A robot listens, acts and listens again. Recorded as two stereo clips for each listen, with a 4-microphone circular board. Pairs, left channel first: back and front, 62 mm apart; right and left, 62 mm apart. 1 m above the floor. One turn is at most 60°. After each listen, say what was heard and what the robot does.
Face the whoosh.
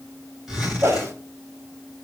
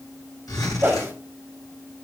The whoosh: 35° left. Turn 35° left.
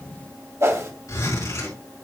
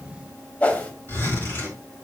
The whoosh is now 30° right. Turn 30° right.
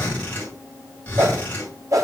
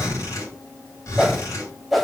Found it: a whoosh, straight ahead.